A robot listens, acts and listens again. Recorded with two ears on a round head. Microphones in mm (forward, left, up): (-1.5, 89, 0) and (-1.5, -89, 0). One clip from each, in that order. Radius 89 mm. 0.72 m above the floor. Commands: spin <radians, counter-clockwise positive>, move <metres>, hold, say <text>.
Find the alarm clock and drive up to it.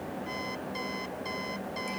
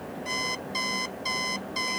spin -0.79
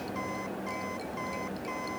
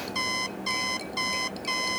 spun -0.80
spin -1.57
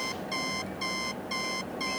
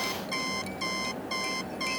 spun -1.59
move 1.0
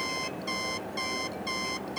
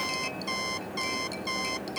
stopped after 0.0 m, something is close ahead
say Something is in my way. I am facing the alarm clock but have not reached it.